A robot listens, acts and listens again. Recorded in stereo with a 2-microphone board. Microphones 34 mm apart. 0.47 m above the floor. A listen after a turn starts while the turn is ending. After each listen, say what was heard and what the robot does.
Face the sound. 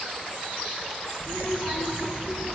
The child speaking: about 70° left or 110° left. Turn 70° left.
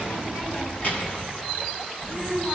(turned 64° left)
So it is at 60° left. Turn 60° left.
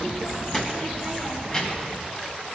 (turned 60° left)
The child speaking is now 15° left. Turn 15° left.
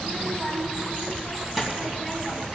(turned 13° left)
Facing the child speaking, 2 to 4 m away.